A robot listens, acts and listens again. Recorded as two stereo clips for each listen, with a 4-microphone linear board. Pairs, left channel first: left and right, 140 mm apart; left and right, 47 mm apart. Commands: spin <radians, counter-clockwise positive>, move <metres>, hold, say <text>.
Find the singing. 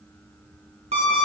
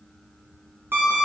hold
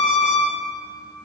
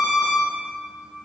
hold
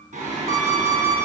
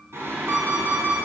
spin -1.57
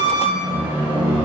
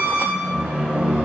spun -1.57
spin -0.35
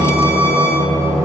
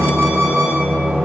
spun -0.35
say Facing the singing, over 4 m away.